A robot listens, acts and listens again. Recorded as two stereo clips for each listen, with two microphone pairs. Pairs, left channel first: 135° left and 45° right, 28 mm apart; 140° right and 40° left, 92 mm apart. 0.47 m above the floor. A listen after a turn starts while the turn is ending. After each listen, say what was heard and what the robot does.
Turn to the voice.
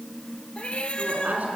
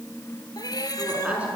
The woman speaking: 35° right. Turn 35° right.
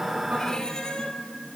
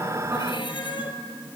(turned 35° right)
Keep listening.
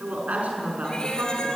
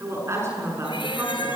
The woman speaking is now 20° right. Turn 20° right.
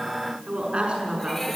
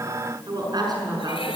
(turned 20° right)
Facing the woman speaking.